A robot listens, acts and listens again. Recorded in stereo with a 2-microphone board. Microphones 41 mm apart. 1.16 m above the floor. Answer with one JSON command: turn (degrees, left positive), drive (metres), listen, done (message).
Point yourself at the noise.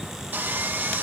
{"turn": -45}
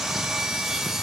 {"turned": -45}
{"done": "Facing the sawing, 1 to 2 m away."}